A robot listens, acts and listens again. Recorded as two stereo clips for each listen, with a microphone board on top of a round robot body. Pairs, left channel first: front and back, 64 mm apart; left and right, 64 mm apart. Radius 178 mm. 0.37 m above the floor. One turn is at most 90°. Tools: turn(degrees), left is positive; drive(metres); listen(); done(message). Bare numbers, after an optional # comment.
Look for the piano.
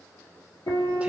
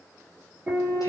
# The piano: 20° right.
turn(-20)
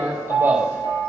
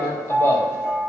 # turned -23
done("Facing the piano.")